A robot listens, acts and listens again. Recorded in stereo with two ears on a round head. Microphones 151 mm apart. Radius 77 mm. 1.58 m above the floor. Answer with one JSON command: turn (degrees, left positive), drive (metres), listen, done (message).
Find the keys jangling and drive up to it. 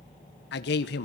{"listen": true}
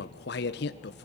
{"listen": true}
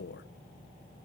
{"done": "I can't make out keys jangling to turn to."}